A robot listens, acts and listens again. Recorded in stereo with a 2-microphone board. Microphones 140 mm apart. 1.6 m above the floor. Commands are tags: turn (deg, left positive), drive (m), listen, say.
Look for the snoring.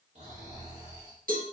<turn deg="-50"/>
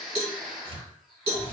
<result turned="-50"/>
<say>Facing the snoring, 2 to 4 m away.</say>